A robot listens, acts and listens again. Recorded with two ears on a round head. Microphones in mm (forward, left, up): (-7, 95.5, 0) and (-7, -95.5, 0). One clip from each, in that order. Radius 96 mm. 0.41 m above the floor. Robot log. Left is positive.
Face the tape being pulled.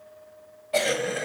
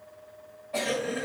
cmd idle
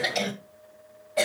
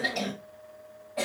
cmd idle
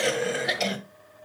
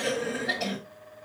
end: I can't make out tape being pulled, only a cough.